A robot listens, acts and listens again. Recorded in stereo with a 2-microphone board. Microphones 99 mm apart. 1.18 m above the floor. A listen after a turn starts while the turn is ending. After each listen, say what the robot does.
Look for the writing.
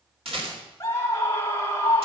Keep listening.
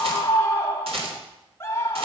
Keep listening.
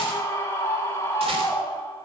I can't make out writing to turn to.